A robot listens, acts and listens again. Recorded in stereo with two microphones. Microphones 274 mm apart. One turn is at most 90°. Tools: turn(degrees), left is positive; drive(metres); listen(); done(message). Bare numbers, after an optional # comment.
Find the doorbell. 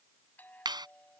turn(30)
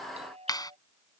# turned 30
# So it is at 25° right.
turn(-25)
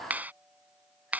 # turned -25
listen()
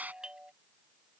done("Found it: a doorbell, straight ahead.")